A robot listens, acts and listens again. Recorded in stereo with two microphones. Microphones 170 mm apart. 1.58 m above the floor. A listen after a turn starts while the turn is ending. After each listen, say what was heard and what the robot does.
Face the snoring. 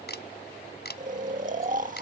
The snoring: about 45° right or 135° right. Turn 45° right.
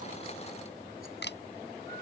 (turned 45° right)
Keep listening.
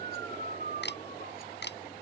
So it is at 85° right. Turn 85° right.
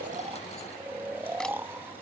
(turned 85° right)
The snoring is now 15° right. Turn 15° right.
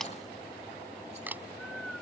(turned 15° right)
Keep listening.
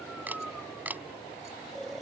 Found it: snoring, straight ahead.